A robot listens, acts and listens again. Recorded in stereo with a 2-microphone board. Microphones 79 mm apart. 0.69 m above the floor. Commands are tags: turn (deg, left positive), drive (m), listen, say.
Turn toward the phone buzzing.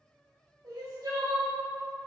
<listen/>
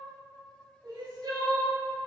<listen/>
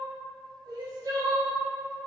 <say>I can't make out a phone buzzing to turn to.</say>